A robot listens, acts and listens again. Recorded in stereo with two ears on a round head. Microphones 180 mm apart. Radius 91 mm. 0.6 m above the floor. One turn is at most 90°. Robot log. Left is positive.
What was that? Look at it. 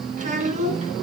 note: The child speaking: about 30° right or 150° right.
cmd yaw -30
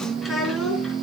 end: Facing the child speaking.